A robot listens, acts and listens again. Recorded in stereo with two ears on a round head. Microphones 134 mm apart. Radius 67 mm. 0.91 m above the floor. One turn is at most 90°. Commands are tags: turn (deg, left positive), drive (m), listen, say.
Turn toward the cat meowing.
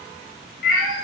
<turn deg="70"/>
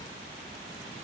<listen/>
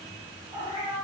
<say>Facing the cat meowing, 2 to 4 m away.</say>